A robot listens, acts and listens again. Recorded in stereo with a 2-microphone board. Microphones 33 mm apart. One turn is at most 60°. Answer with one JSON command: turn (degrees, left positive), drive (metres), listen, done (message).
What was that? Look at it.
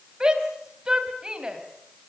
{"turn": -25}
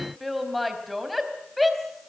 {"done": "Facing the shout, over 4 m away."}